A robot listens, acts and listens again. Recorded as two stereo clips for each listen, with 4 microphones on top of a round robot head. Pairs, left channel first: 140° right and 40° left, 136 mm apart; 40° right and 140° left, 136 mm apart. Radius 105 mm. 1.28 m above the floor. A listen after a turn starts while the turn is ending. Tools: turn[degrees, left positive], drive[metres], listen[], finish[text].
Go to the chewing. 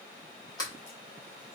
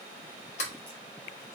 Action: listen[]
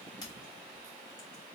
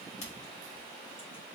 Action: listen[]
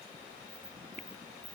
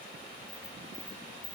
Action: finish[I can't make out chewing, only a sliding door.]